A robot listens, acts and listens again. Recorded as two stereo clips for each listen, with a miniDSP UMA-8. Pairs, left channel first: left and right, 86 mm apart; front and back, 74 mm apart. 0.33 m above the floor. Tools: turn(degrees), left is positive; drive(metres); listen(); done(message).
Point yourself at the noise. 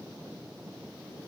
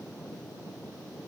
listen()
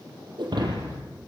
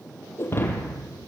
turn(degrees=-60)
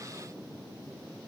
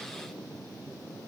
done("Facing where the breaking glass came from. I can't hear it now.")